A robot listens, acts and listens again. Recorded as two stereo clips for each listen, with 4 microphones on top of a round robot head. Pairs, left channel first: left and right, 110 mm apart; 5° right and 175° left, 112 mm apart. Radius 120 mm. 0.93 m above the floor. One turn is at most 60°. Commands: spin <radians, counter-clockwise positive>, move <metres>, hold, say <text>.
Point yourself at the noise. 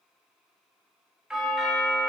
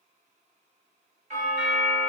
spin -1.05
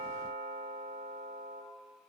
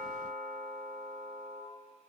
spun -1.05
spin -1.05
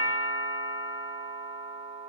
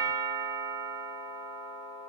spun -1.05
spin -0.96
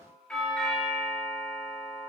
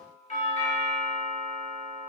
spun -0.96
spin 0.17
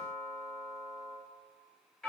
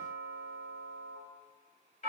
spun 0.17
say Found it: a doorbell, straight ahead, 2 to 4 m away.